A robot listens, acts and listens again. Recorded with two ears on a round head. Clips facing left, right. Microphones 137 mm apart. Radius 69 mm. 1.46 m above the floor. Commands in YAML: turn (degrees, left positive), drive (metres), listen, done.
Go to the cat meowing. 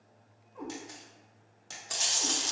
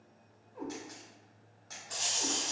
turn: -30
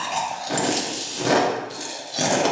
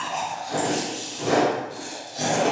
listen: true
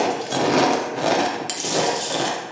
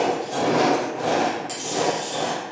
listen: true
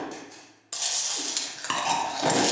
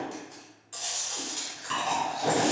done: "I heard a cat meowing, but can't make it out now. It was about 20° left or 140° right. I did not reach it."